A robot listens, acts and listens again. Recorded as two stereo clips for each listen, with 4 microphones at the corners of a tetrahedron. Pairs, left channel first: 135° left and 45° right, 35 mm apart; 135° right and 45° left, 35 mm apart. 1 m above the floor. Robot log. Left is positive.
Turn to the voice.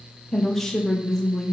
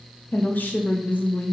note: The woman speaking: 145° right.
cmd yaw -145
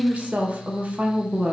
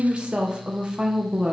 note: The woman speaking is now 10° right.
cmd yaw -10
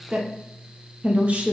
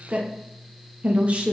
end: Found it: a woman speaking, straight ahead, under 1 m away.